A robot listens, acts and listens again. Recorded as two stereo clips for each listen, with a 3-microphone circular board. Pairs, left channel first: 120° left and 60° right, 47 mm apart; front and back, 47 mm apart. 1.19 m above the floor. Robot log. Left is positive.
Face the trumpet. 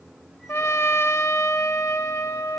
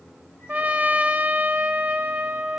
note: The trumpet: 125° left.
cmd yaw +125
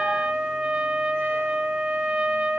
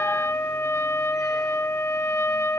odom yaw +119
end: Found it: a trumpet, straight ahead.